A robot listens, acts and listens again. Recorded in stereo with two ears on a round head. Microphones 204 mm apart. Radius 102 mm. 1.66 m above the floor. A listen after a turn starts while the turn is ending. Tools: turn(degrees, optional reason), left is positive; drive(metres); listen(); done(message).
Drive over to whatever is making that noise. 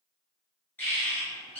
turn(degrees=30)
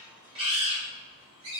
turn(degrees=-25, reason="So it is at 25° right.")
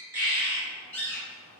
turn(degrees=10, reason="The bird is now 10° left.")
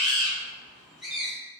drive(metres=1.0)
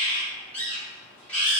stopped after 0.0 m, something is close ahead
done("Something is in my way. I am facing the bird but have not reached it.")